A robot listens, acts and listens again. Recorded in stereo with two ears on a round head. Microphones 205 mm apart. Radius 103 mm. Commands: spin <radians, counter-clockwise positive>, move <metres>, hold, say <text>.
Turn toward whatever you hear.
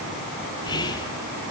spin 0.35
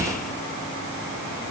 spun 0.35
hold
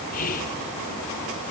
spin 2.44
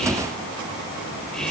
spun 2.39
say Facing the whispering.